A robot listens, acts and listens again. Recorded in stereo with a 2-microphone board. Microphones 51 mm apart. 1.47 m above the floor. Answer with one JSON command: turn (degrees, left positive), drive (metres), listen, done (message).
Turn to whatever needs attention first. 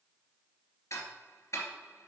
{"listen": true}
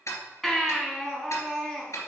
{"turn": 30}
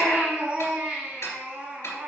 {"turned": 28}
{"turn": -20}
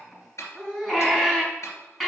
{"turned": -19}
{"done": "Found it: a baby crying, straight ahead."}